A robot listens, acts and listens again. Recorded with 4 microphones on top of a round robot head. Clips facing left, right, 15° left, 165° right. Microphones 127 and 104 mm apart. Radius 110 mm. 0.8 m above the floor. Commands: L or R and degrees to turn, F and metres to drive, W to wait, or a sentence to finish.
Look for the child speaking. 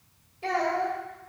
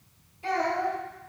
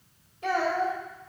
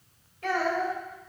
L80
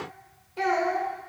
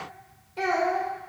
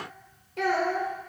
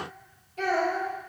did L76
Found it: a child speaking, straight ahead, 2 to 4 m away.